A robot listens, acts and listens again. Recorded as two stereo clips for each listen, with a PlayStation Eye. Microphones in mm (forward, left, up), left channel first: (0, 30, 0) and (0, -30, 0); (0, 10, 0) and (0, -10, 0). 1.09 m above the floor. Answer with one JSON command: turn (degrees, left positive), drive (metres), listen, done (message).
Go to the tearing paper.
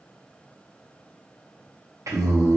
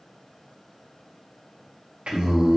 {"listen": true}
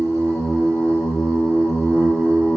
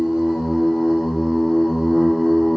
{"listen": true}
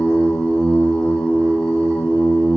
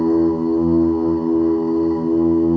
{"done": "I can't make out tearing paper to turn to."}